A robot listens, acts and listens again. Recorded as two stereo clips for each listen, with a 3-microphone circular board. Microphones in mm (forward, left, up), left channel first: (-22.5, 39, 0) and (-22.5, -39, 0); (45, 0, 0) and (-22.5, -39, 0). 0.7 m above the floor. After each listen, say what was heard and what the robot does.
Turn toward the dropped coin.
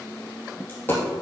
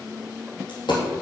The dropped coin: 30° left. Turn 30° left.
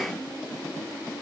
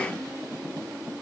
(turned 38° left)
Nothing new. It was at 10° right. Turn 10° right.
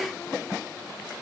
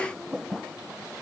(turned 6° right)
I heard a dropped coin from this way, but can't make it out now.